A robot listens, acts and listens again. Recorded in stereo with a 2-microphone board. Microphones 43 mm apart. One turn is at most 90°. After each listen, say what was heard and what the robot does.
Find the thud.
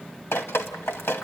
Keep listening.
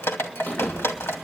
The thud: about 35° left or 145° left. Turn 35° left.
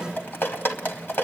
Keep listening.
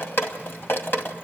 I heard a thud, but can't make it out now. It was about straight ahead or 110° left.